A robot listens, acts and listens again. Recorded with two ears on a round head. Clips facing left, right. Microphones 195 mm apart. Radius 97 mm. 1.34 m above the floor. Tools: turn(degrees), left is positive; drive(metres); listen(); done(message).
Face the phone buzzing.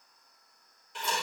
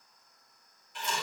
listen()
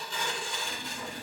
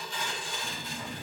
turn(degrees=-30)
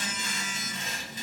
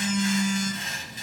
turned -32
done("Found it: a phone buzzing, straight ahead.")